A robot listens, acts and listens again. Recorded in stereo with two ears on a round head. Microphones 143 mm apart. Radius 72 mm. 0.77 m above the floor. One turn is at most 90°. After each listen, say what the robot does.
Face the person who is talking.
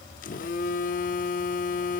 Keep listening.
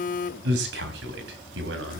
Turn 90° right.
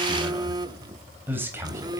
Turn 15° right.
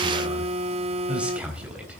Turn 10° right.
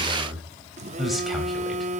Facing the man speaking.